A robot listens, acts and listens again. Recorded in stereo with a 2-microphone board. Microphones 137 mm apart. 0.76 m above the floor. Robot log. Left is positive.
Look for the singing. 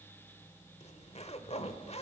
cmd idle
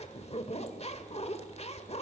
cmd idle
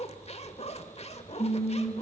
note: The singing: about 45° left or 135° left.
cmd yaw +45
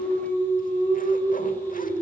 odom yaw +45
note: So it is at 85° left.
cmd yaw +85
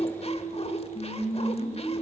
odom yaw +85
note: The singing is now 45° left.
cmd yaw +45
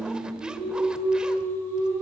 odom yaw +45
note: The singing is now 10° right.
cmd yaw -10
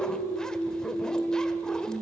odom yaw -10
end: Found it: singing, straight ahead, over 4 m away.